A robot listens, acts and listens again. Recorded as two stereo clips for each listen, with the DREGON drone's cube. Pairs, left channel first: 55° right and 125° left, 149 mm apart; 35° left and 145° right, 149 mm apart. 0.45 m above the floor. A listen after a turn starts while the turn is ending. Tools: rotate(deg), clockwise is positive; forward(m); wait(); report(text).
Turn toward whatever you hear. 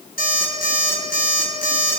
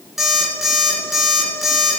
rotate(60)
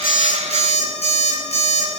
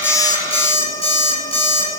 rotate(15)
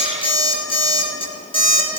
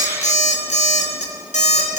report("Found it: an alarm clock, straight ahead, 2 to 4 m away.")